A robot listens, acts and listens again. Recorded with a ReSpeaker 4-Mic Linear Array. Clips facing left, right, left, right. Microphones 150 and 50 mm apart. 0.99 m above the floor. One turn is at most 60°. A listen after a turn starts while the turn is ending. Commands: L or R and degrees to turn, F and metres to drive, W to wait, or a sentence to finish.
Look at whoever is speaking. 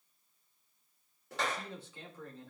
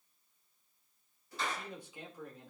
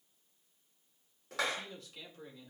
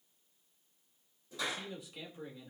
R30
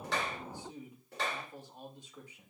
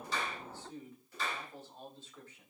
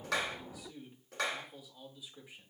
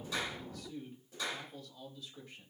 L15
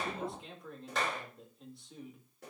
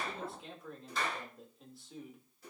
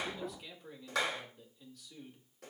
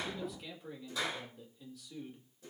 Facing the man speaking.